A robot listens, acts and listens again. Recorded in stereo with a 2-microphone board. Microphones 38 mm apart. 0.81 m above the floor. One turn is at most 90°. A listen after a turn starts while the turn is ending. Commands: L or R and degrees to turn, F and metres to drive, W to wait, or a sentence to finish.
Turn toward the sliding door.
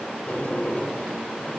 L50
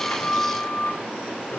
L80
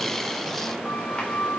L30
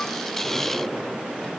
R10
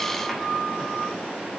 Found it: a sliding door, straight ahead, 2 to 4 m away.